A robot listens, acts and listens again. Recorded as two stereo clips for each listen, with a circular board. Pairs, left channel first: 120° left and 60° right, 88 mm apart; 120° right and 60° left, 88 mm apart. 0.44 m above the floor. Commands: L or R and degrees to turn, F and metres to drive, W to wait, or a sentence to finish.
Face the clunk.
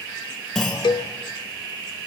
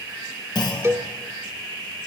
R155
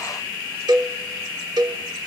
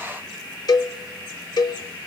Facing where the clunk came from. I can't hear it now.